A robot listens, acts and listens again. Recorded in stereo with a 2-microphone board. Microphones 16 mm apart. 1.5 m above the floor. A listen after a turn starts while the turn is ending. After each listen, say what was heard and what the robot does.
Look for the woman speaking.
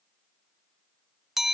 Keep listening.
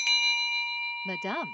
Turn 30° left.
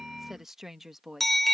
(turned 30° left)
So it is at 10° right. Turn 10° right.
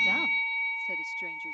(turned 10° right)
Keep listening.
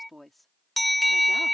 The woman speaking is now 10° left. Turn 10° left.
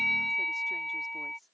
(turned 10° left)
Keep listening.
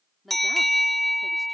Found it: a woman speaking, straight ahead.